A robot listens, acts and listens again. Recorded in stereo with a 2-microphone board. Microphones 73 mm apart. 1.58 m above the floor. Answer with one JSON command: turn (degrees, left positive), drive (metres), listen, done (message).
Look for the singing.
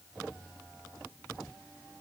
{"listen": true}
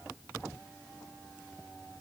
{"listen": true}
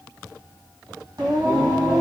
{"turn": -65}
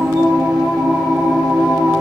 {"turn": -50}
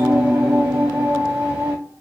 {"turn": -15}
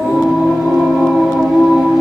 {"done": "Facing the singing."}